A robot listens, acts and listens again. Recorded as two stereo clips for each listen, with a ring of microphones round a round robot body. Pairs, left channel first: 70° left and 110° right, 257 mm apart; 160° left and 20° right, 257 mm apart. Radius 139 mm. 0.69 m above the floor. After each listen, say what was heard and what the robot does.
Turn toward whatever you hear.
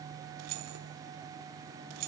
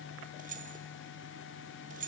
The keys jangling: 85° right. Turn 85° right.
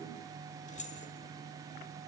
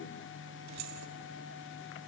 Found it: keys jangling, straight ahead, 1 to 2 m away.